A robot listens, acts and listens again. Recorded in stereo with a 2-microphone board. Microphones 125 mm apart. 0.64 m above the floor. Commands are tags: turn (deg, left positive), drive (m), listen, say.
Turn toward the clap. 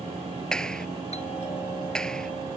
<turn deg="30"/>
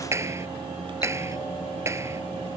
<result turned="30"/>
<turn deg="-20"/>
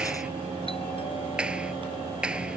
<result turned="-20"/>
<turn deg="-10"/>
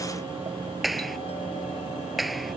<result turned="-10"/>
<say>Facing the clap.</say>